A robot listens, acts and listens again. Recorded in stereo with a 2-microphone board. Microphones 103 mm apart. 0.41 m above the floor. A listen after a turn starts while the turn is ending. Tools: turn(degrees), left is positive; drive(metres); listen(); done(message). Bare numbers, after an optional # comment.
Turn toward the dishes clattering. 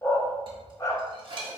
# The dishes clattering: about 50° right or 130° right.
turn(-50)
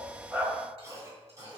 listen()
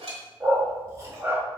# So it is at 75° right.
turn(-75)
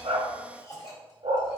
listen()
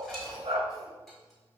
done("Facing the dishes clattering, 1 to 2 m away.")